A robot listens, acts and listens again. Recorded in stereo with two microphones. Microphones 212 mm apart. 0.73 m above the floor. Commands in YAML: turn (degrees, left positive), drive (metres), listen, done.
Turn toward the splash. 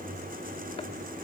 listen: true
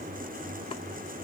listen: true
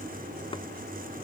done: "I can't make out a splash to turn to."